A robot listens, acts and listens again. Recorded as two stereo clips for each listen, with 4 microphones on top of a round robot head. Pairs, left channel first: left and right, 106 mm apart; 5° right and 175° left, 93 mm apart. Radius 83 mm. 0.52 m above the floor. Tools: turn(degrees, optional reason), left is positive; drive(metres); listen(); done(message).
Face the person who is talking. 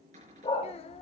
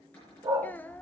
turn(degrees=65, reason="The child speaking: 65° left.")
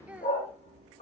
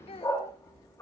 turn(degrees=-10, reason="The child speaking is now 10° right.")
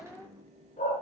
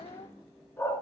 done("Found it: a child speaking, straight ahead.")